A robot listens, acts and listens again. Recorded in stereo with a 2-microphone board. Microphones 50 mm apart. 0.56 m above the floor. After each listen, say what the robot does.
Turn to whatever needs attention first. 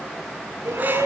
Turn 90° right.
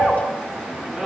Found it: a shout, straight ahead.